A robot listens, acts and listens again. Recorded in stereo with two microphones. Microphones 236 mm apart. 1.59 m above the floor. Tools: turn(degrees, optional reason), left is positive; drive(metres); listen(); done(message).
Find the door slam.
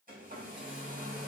listen()
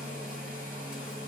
listen()
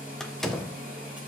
turn(degrees=30)
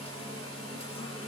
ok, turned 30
listen()
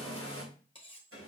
done("I heard a door slam, but can't make it out now. It was about 30° right or 150° left.")